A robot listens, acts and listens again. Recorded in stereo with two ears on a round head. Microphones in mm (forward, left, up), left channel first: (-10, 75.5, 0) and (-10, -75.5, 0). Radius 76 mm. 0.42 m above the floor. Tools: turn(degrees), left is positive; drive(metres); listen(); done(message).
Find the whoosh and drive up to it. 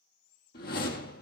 turn(degrees=65)
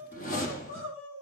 turn(degrees=50)
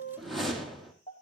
drive(metres=1.0)
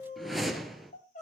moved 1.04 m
drive(metres=1.0)
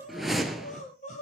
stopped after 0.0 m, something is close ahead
done("I am next to the whoosh.")